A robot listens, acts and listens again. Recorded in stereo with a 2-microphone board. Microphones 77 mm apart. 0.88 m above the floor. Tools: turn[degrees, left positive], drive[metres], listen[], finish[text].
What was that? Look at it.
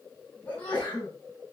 Thought: The sneeze: about 20° left or 160° left.
Action: turn[20]
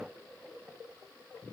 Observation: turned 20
Action: listen[]
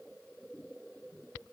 Action: finish[I heard a sneeze, but can't make it out now. It was about straight ahead or 140° left.]